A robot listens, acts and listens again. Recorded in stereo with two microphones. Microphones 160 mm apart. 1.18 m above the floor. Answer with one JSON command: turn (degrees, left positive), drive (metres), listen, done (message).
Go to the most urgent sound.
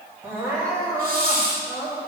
{"turn": -15}
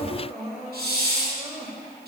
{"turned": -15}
{"turn": -150}
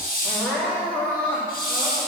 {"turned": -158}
{"turn": 10}
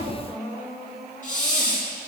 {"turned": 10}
{"drive": 1.0}
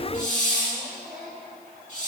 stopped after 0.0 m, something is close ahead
{"done": "Blocked. The crying is further on, straight ahead."}